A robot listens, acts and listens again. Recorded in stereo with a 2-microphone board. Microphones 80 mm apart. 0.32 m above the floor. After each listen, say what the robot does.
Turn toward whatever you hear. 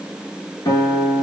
Turn 60° left.
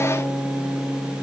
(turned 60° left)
Facing the guitar, 1 to 2 m away.